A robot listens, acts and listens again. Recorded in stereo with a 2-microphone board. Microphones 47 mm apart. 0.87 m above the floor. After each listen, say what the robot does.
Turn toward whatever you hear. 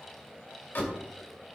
Turn 45° left.
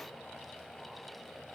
Keep listening.
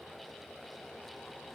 I heard a door slam, but can't make it out now. It was about straight ahead or 90° left.